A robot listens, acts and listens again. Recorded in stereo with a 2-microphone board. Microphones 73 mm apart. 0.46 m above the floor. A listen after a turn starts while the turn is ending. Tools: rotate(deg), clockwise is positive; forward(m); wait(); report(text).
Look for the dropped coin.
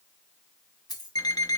rotate(-70)
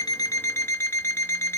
wait()
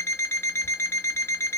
report("I heard a dropped coin, but can't make it out now. It was about straight ahead or 40° left.")